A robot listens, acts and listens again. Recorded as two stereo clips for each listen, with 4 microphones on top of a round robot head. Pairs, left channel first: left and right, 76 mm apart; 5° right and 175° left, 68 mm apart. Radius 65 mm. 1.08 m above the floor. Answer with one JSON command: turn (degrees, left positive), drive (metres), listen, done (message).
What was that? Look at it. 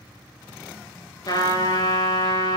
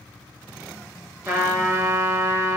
{"turn": 120}
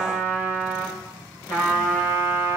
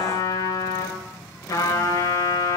{"turn": 30}
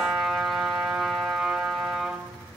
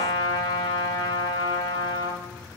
{"done": "Found it: a trumpet, straight ahead, over 4 m away."}